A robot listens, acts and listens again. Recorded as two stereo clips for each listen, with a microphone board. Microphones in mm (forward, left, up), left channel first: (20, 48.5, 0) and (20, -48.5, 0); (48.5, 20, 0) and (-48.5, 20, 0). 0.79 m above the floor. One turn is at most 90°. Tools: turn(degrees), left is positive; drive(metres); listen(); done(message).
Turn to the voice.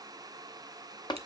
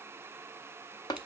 listen()
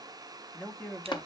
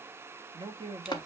turn(degrees=90)
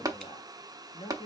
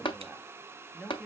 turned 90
turn(degrees=85)
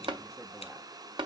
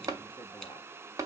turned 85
listen()
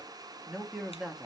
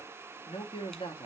done("Facing the man speaking.")